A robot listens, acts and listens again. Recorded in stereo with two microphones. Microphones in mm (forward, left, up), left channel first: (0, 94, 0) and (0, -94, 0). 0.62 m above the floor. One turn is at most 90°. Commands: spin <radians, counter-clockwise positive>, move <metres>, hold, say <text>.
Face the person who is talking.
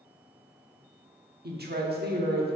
spin -1.05
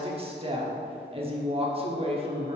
spin -0.61
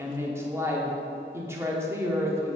spin -0.26
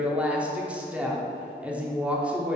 say Facing the woman speaking, 1 to 2 m away.